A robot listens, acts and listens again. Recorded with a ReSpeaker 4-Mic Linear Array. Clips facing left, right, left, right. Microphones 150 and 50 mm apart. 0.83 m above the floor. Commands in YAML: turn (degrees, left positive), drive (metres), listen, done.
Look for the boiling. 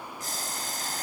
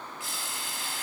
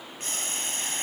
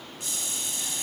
turn: 45
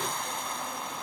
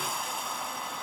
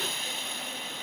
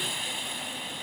done: "Facing the boiling."